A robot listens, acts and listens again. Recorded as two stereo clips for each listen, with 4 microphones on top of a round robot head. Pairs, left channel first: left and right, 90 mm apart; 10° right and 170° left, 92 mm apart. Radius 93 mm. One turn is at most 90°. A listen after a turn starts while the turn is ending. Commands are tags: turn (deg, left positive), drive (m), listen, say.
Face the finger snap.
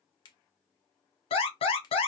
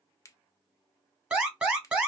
<turn deg="45"/>
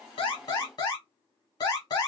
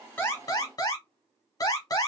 <listen/>
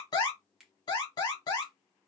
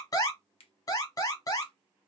<say>Facing the finger snap.</say>